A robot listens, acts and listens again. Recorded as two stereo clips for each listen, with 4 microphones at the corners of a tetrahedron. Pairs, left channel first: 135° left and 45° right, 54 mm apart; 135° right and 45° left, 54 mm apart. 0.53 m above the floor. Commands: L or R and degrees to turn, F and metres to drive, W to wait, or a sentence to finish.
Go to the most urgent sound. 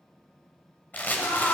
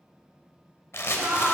L105
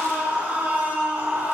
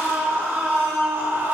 L10
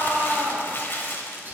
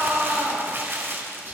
F1.0
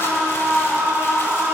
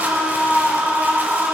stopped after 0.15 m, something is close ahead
Blocked. The scream is further on, straight ahead.